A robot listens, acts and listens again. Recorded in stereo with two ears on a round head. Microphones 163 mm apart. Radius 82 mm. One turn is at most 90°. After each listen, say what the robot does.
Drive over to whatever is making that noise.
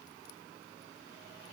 Keep listening.
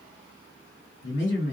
Turn 70° left.
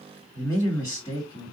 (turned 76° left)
Turn 25° left.
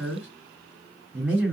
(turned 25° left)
Drive 1.0 m forward.
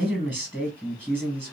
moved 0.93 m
Drive 1.0 m forward.
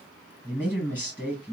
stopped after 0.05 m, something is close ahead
I am next to the man speaking.